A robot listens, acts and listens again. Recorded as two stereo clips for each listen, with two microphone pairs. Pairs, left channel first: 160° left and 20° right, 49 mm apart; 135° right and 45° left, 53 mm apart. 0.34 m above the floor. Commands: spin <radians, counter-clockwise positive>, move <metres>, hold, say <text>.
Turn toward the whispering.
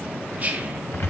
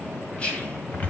spin -1.31
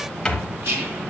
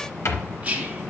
spin -0.26
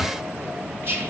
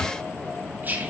say Found it: whispering, straight ahead, 2 to 4 m away.